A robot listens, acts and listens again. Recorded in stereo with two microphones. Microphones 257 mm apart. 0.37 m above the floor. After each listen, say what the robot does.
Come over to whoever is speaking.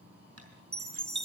Keep listening.
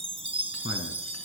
Turn 55° left.
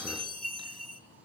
Keep listening.
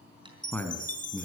Drive 1.0 m forward.
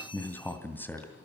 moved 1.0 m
Turn 10° left.
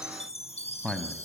Drive 1.0 m forward.
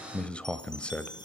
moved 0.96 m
Drive 1.0 m forward.
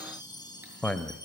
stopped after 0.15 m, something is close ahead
Arrived at the man speaking, straight ahead.